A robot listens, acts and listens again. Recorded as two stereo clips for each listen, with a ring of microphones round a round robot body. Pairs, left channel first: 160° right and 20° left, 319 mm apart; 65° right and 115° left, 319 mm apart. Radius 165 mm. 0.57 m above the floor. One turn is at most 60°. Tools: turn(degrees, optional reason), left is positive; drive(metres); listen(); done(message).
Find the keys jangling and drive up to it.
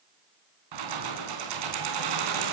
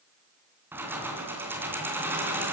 turn(degrees=30, reason="The keys jangling: 30° left.")
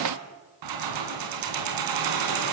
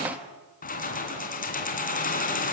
drive(metres=1.0)
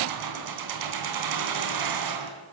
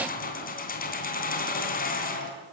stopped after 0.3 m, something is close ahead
done("Something is in my way. I am facing the keys jangling but have not reached it.")